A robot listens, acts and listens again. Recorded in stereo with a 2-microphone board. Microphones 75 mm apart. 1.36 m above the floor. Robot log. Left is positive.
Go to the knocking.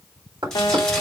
cmd yaw -90
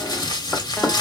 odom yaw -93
cmd fwd 1.0
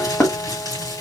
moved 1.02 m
note: The knocking is now 10° left.
cmd yaw +10
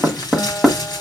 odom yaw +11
cmd fwd 1.0
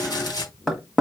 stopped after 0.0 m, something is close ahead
end: Arrived at the knocking, straight ahead.